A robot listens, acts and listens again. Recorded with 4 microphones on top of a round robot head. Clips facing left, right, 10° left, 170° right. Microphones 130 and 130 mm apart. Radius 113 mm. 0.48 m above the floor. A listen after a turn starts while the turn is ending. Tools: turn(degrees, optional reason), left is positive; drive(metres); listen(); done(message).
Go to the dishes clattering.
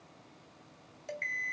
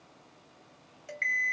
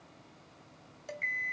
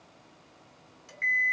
turn(degrees=30, reason="The dishes clattering: 30° left.")
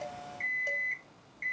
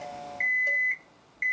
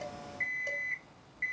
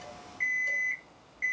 listen()
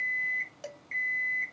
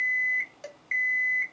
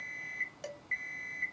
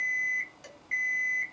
drive(metres=1.0)
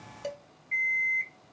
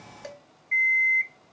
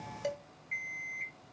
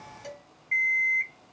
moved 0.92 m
turn(degrees=15, reason="The dishes clattering is now 15° left.")
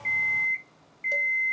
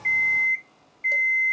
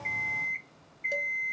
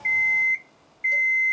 listen()
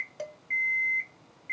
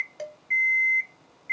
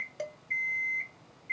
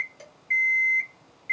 drive(metres=1.0)
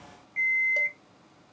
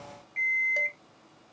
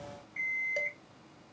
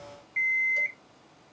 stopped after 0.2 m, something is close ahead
listen()
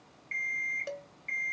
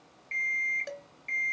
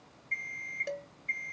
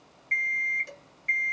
done("I am next to the dishes clattering.")